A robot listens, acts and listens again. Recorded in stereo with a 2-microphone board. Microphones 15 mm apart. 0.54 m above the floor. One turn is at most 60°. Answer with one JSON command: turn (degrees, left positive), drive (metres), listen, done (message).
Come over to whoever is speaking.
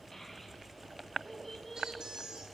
{"turn": 25}
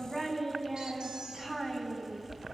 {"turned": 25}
{"drive": 1.0}
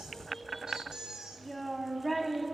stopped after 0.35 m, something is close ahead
{"done": "Something is in my way. I am facing the child speaking but have not reached it."}